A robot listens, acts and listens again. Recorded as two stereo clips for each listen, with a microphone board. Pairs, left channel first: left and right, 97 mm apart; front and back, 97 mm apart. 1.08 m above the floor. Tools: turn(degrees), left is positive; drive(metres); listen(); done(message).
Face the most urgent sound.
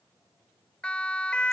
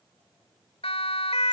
turn(degrees=10)
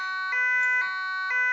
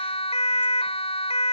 done("Facing the siren.")